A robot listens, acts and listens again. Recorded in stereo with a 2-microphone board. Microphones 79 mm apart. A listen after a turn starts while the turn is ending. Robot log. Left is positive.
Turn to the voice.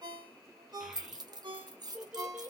note: The child speaking: about 25° right or 155° right.
cmd yaw -25
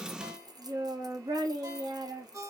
note: So it is at 115° right.
cmd yaw -115
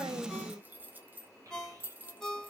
note: The child speaking is now 40° right.
cmd yaw -40
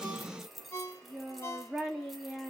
note: The child speaking is now 10° right.
cmd yaw -10
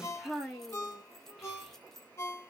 end: Found it: a child speaking, straight ahead, 2 to 4 m away.